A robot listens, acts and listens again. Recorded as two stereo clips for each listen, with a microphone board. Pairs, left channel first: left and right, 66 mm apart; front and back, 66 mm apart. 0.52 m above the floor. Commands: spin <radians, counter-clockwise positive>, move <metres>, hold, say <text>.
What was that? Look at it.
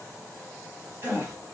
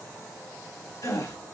spin -0.61
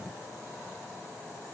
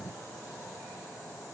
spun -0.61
say Facing where the gasp came from. I can't hear it now.